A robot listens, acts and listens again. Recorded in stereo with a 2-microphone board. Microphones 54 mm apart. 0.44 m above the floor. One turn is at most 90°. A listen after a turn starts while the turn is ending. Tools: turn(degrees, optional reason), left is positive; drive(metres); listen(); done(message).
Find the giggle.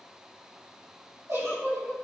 turn(degrees=-70, reason="The giggle: about 70° right or 110° right.")
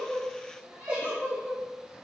turn(degrees=-25, reason="So it is at 25° right.")
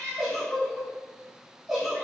done("Facing the giggle.")